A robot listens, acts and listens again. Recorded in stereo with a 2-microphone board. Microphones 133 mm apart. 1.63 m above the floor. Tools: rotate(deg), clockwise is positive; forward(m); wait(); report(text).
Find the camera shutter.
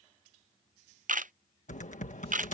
rotate(90)
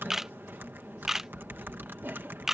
report("Facing the camera shutter.")